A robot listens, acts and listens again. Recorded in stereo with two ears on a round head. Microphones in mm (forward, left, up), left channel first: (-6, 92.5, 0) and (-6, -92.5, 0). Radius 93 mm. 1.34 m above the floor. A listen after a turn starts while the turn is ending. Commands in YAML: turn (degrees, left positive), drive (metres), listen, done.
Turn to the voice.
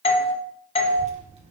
turn: -30
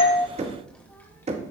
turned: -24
turn: 10
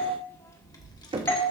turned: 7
turn: 20
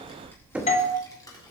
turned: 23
turn: 20
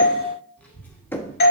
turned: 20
turn: 10
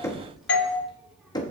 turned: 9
done: "Found it: a child speaking, straight ahead, 2 to 4 m away."